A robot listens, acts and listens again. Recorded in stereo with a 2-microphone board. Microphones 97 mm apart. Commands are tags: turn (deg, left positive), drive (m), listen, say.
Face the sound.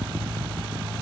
<listen/>
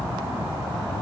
<listen/>
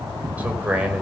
<turn deg="-30"/>
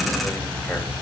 <listen/>
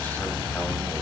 <listen/>
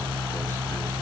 <say>I heard a man speaking, but can't make it out now. It was about 15° left or 135° right.</say>